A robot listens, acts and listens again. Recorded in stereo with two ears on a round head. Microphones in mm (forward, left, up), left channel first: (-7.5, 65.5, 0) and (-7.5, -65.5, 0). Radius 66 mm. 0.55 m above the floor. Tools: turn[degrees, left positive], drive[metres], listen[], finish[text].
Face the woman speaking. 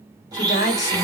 Thought: The woman speaking: about 45° left or 135° left.
Action: turn[45]
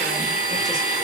Action: listen[]
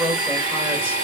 Action: finish[Facing the woman speaking.]